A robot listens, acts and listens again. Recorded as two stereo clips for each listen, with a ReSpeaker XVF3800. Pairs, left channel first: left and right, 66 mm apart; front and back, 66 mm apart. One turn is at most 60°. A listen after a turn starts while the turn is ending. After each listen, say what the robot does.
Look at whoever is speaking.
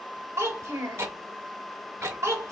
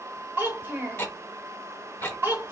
Turn 60° right.
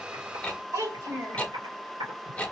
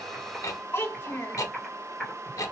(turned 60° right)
Turn 55° right.
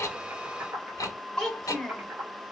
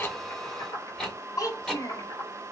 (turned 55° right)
Facing the child speaking.